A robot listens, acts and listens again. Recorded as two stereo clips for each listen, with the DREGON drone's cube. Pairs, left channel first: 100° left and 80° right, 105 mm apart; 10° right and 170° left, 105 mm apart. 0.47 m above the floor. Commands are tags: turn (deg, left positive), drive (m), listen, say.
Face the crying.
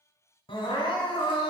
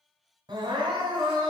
<turn deg="130"/>
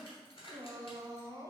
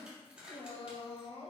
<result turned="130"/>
<turn deg="-30"/>
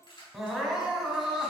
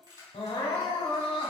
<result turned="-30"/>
<say>Facing the crying, 1 to 2 m away.</say>